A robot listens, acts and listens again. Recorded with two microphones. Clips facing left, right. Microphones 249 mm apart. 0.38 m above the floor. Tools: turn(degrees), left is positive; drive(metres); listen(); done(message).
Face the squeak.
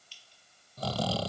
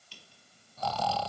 turn(degrees=-65)
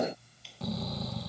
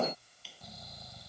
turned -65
done("Found it: a squeak, straight ahead.")